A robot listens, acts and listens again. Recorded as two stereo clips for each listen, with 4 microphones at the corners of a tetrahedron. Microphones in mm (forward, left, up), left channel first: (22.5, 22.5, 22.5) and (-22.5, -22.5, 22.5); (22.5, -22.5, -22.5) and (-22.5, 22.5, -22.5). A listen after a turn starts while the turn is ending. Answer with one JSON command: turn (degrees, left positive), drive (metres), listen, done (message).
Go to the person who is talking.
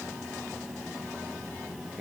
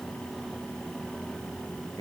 {"listen": true}
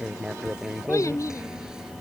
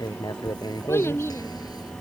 {"drive": 1.0}
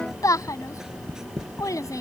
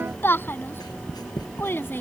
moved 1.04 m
{"turn": 15}
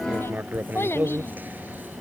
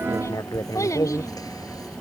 {"drive": 1.0}
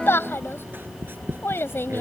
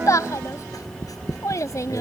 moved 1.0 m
{"drive": 1.0}
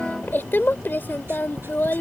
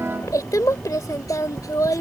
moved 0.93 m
{"turn": -10}
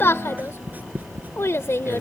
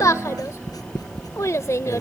{"drive": 1.0}
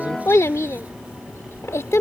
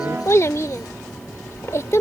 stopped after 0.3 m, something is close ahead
{"done": "Arrived at the child speaking, straight ahead."}